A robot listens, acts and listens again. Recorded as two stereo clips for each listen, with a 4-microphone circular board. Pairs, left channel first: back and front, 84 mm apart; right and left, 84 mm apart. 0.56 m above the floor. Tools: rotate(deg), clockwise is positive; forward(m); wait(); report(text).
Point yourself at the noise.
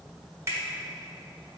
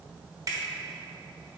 rotate(-50)
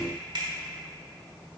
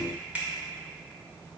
rotate(-20)
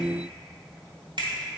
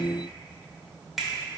report("Found it: a finger snap, straight ahead.")